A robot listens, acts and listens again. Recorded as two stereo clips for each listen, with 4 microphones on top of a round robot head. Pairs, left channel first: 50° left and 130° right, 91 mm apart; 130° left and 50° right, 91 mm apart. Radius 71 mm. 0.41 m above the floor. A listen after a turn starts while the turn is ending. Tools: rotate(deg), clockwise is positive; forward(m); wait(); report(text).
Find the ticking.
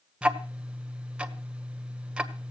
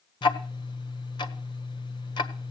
rotate(-155)
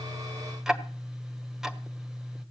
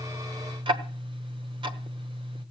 rotate(45)
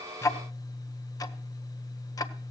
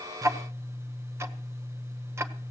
rotate(-10)
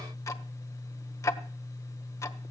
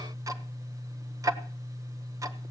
report("Facing the ticking, 1 to 2 m away.")